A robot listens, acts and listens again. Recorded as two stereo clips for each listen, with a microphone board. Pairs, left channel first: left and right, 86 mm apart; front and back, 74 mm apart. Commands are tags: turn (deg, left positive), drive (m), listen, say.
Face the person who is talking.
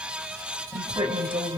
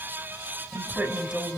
<turn deg="-100"/>
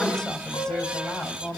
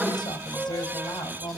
<turn deg="10"/>
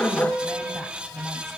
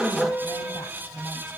<say>Found it: a woman speaking, straight ahead.</say>